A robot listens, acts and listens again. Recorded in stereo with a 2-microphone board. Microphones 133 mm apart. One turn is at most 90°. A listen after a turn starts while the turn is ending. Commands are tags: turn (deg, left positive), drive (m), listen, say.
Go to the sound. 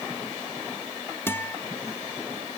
<turn deg="20"/>
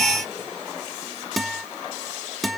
<drive m="1.0"/>
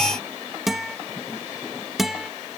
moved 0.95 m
<drive m="1.0"/>
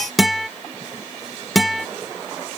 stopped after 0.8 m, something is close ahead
<say>Arrived at the guitar, straight ahead.</say>